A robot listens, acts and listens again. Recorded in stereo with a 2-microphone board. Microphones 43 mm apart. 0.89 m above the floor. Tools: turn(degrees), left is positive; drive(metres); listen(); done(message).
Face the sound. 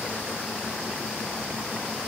listen()
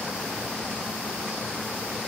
listen()
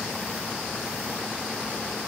done("I can't make out anything.")